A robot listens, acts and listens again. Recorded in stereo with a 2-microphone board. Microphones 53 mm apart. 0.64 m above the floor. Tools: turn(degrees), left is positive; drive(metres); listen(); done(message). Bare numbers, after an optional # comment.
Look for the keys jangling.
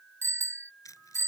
turn(90)
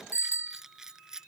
# So it is at 10° right.
turn(-10)
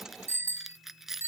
done("Facing the keys jangling.")